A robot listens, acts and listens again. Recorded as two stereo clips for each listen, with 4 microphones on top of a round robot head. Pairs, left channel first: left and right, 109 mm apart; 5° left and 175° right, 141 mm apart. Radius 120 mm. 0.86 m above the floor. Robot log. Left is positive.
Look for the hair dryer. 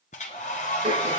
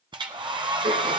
note: The hair dryer: 130° left.
cmd yaw +130
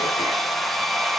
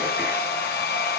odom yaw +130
end: Found it: a hair dryer, straight ahead, 1 to 2 m away.